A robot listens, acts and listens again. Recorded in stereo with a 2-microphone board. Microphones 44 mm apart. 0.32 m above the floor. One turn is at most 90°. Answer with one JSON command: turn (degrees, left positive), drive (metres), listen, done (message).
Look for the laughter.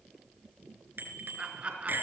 {"turn": -30}
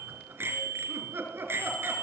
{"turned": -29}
{"turn": -90}
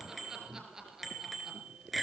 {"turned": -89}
{"turn": -10}
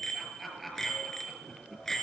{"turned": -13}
{"done": "Facing the laughter, over 4 m away."}